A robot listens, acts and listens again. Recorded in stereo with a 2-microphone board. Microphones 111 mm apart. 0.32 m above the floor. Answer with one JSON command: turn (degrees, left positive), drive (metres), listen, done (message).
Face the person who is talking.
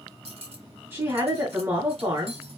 {"turn": -20}
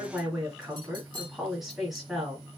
{"done": "Facing the woman speaking."}